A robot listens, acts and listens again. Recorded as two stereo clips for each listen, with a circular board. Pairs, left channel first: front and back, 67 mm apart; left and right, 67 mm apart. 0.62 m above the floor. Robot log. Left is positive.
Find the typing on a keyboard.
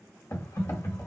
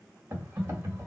note: The typing on a keyboard: 40° right.
cmd yaw -40
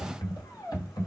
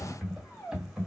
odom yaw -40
end: Facing the typing on a keyboard.